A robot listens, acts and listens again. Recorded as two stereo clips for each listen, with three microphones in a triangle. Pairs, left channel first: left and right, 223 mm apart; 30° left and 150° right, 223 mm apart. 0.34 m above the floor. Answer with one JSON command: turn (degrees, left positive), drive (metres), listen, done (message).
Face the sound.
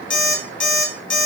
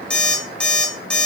{"turn": 115}
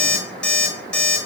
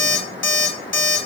{"done": "Facing the alarm clock."}